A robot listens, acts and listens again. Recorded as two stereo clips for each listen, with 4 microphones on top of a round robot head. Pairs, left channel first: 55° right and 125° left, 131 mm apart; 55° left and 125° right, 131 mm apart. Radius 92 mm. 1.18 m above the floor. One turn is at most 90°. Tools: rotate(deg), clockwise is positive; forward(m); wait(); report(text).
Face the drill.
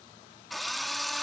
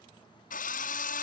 rotate(-35)
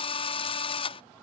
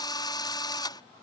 report("Found it: a drill, straight ahead.")